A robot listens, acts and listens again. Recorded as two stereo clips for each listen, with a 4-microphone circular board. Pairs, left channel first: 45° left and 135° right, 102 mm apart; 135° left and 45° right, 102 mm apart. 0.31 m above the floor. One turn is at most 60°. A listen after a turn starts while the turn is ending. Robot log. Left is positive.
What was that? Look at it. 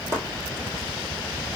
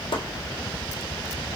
note: The chopping: 165° left.
cmd yaw +60
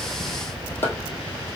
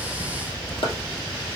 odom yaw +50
note: The chopping is now 115° left.
cmd yaw +60
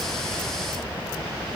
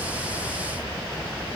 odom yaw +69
note: Nothing new. It was at 45° left.
cmd yaw +45
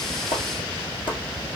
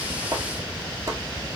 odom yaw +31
note: The chopping is now 15° left.
cmd yaw +15
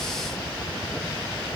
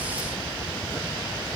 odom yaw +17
cmd idle
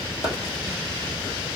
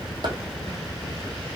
cmd idle
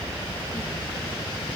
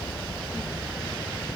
end: Facing where the chopping came from. I can't hear it now.